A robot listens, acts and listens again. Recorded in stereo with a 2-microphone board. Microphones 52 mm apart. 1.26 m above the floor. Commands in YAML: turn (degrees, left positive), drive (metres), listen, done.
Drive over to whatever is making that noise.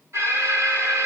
turn: -75
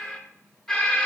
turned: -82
drive: 1.0
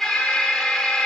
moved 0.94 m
drive: 1.0
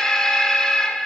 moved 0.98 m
turn: 10
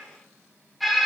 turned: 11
drive: 1.0
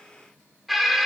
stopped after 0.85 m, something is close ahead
done: "I am next to the alarm."